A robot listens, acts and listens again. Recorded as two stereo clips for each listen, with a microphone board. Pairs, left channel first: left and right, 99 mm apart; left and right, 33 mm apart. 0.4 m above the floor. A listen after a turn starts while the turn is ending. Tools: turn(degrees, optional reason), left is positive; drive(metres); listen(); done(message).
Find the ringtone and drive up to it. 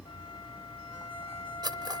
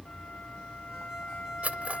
listen()
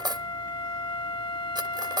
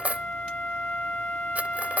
listen()
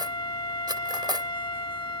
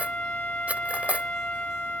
done("I can't make out a ringtone, only cutlery clinking and a flute.")